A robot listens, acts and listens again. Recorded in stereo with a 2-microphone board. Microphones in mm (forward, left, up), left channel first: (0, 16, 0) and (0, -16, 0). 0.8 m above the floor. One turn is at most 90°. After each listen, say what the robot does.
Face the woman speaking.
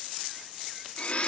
Keep listening.
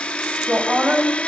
Turn 90° right.
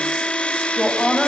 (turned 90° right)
Found it: a woman speaking, straight ahead.